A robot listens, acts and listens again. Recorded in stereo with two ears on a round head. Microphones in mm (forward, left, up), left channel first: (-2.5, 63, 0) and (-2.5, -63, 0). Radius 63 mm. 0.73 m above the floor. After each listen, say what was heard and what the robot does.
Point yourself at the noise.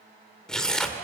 Turn 30° left.
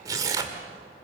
So it is at 25° right. Turn 25° right.
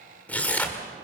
The tearing paper is now 10° left. Turn 10° left.
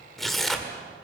Facing the tearing paper, 1 to 2 m away.